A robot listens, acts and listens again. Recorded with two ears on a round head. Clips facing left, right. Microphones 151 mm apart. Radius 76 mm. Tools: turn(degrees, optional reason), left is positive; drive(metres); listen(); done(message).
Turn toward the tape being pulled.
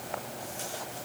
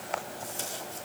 turn(degrees=-45, reason="The tape being pulled: about 45° right or 135° right.")
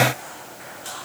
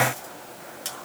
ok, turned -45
turn(degrees=-90, reason="So it is at 90° right.")
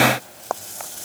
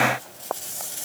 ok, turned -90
turn(degrees=-25, reason="The tape being pulled is now 25° right.")
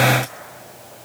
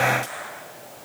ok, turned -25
listen()
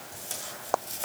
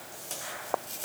done("Found it: tape being pulled, straight ahead.")